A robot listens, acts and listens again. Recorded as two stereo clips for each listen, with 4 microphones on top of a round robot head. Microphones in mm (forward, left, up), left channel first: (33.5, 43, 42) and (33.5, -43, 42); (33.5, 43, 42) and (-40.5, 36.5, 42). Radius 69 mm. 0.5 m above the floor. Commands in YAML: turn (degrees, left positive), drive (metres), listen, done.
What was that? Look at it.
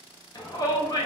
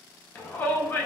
turn: 65
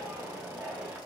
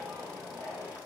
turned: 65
listen: true
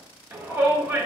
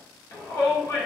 turn: -30
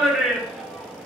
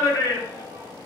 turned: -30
done: "Facing the shout, 1 to 2 m away."